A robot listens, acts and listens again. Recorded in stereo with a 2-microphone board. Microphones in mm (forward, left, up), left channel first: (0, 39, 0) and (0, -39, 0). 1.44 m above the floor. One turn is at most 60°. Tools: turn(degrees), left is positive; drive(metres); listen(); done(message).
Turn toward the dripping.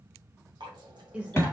turn(degrees=-60)
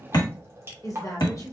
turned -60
turn(degrees=-35)
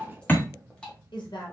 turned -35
turn(degrees=15)
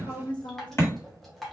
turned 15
done("Facing the dripping.")